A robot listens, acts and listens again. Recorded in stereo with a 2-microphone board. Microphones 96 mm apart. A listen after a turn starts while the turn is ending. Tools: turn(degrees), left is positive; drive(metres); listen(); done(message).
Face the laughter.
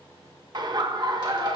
turn(degrees=-50)
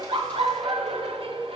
turn(degrees=-80)
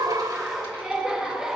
done("Found it: laughter, straight ahead, under 1 m away.")